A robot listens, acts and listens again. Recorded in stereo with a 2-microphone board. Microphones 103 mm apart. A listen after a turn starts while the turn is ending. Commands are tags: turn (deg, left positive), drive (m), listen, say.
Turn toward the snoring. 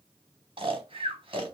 <turn deg="-60"/>
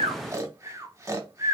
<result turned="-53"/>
<turn deg="-30"/>
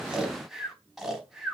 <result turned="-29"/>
<say>Facing the snoring.</say>